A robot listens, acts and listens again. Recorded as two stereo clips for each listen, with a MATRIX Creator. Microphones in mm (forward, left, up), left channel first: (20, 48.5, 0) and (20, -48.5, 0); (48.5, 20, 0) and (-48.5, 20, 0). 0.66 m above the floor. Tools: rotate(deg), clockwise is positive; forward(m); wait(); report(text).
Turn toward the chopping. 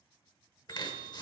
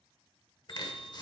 rotate(-45)
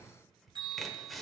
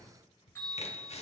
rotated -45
report("Found it: chopping, straight ahead, 1 to 2 m away.")